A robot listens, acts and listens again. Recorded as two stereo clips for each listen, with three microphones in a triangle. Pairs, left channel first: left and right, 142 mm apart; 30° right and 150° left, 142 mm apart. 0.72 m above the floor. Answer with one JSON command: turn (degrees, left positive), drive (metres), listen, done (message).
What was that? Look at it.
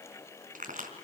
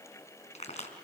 {"turn": -70}
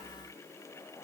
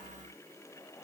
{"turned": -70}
{"done": "I heard a crack from this way, but can't make it out now."}